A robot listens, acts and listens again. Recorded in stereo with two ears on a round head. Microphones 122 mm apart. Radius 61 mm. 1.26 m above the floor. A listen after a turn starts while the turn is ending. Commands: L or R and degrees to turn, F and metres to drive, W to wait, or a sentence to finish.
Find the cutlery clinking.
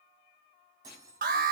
R25
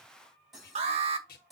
Found it: cutlery clinking, straight ahead, over 4 m away.